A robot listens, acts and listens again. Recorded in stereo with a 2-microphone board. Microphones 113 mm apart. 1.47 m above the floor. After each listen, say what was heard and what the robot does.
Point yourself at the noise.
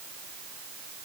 Keep listening.
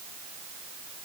Keep listening.
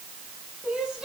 Turn 30° right.
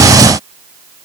Keep listening.
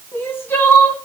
So it is at 20° left. Turn 20° left.
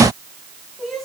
Found it: crying, straight ahead.